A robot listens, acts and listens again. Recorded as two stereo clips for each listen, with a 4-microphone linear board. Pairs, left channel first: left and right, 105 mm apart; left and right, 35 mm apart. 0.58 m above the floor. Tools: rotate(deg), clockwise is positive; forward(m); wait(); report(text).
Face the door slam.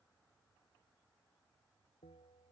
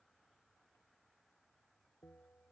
wait()
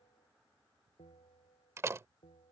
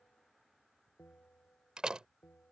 rotate(25)
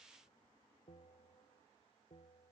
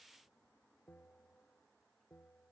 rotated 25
wait()
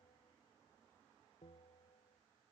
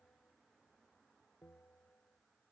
report("I heard a door slam, but can't make it out now. It was about straight ahead or 130° right.")